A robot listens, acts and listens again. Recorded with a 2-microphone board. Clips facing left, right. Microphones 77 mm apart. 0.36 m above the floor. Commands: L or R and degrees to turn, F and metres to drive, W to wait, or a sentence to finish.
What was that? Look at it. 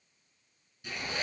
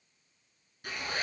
R50
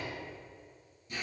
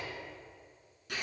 R85
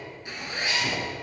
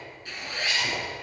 L20
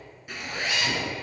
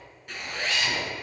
Found it: a zipper, straight ahead.